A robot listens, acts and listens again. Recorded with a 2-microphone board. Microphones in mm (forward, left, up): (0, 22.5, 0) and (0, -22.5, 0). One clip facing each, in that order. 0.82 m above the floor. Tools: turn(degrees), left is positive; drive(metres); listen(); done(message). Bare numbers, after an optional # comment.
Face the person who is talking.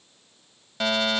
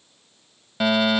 listen()
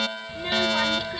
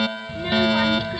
turn(-30)
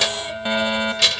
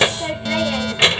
# So it is at 145° right.
turn(-145)
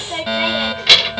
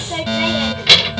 done("Found it: a child speaking, straight ahead.")